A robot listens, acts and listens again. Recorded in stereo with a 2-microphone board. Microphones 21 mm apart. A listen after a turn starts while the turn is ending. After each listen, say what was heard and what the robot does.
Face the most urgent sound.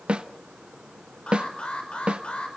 The alarm: about 75° left or 105° left. Turn 75° left.
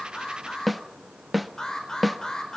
So it is at 30° left. Turn 30° left.
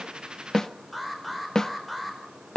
Found it: an alarm, straight ahead, over 4 m away.